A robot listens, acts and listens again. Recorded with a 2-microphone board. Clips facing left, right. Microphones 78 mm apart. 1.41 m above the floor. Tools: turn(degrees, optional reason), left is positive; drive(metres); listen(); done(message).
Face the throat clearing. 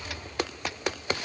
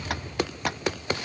listen()
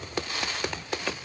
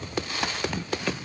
turn(degrees=-65, reason="The throat clearing: about 65° right or 115° right.")
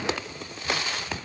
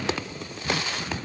turn(degrees=-45, reason="So it is at 45° right.")
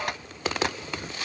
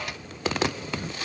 done("Facing the throat clearing.")